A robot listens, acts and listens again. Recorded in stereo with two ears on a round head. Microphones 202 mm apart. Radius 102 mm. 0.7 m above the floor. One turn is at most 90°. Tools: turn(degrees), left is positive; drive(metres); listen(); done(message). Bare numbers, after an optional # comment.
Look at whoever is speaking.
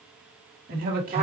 # The man speaking: about 40° right or 140° right.
turn(-40)
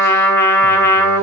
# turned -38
listen()
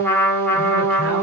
listen()
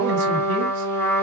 done("I heard a man speaking, but can't make it out now. It was about 5° right or 100° right.")